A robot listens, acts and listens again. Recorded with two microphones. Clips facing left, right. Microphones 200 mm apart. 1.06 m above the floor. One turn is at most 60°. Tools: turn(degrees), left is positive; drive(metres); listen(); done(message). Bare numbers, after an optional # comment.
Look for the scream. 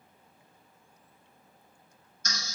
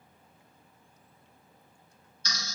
listen()
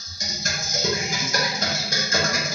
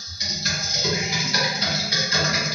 listen()
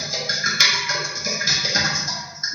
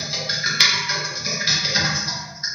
done("I can't make out a scream, only typing on a keyboard.")